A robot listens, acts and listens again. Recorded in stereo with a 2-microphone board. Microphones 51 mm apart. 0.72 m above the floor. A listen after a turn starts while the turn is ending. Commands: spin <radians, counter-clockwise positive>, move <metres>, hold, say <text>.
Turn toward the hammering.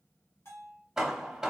spin -0.52
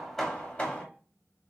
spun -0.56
spin 0.44
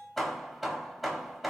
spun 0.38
say Found it: hammering, straight ahead.